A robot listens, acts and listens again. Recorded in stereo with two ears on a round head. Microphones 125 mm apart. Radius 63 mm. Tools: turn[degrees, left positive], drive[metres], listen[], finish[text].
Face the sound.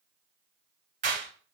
Thought: The clap: about 55° right or 125° right.
Action: turn[-55]
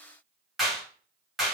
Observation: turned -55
Action: finish[Found it: a clap, straight ahead, 1 to 2 m away.]